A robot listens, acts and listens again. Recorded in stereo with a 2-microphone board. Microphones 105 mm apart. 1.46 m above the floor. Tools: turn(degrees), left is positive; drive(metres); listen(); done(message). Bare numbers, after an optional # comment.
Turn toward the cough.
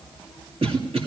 # The cough: about 65° right or 115° right.
turn(-65)
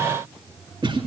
# So it is at 50° right.
turn(-50)
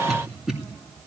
done("Facing the cough, 2 to 4 m away.")